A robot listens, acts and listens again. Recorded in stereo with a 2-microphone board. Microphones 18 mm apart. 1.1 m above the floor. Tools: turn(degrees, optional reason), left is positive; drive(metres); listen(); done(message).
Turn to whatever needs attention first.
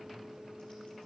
listen()
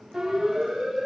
turn(degrees=-25, reason="The siren: about 25° right or 155° right.")
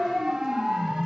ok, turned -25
turn(degrees=-130, reason="So it is at 130° right.")
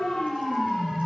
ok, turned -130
done("Facing the siren.")